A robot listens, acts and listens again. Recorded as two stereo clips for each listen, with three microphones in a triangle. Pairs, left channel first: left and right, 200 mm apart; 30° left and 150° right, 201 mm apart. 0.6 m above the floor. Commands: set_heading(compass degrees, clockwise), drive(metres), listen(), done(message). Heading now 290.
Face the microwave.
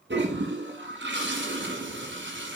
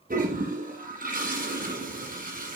listen()
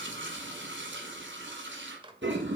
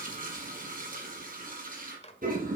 set_heading(315)
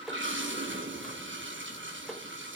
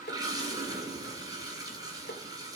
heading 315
done("Facing the microwave, 1 to 2 m away.")